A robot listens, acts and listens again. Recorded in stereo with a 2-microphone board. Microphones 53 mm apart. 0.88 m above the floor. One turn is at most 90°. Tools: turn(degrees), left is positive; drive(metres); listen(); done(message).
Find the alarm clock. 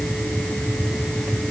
listen()
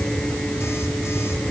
listen()
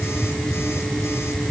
done("I can't make out an alarm clock to turn to.")